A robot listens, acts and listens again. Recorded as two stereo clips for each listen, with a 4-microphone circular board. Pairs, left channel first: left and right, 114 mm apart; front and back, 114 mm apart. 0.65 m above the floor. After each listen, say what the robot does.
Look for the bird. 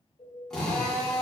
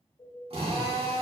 Turn 60° left.
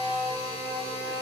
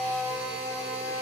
Keep listening.
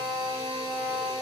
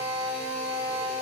Keep listening.
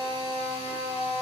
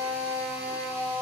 I heard a bird from this way, but can't make it out now.